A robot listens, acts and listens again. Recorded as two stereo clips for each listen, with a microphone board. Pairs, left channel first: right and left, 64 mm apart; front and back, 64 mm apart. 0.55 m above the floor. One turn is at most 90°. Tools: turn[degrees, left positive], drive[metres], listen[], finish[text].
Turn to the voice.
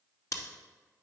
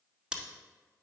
Action: listen[]
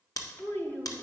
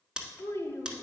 Thought: The child speaking: 40° right.
Action: turn[-40]
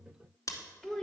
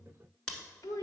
Thought: The child speaking is now 10° right.
Action: turn[-10]
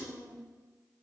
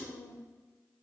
Action: finish[Found it: a child speaking, straight ahead.]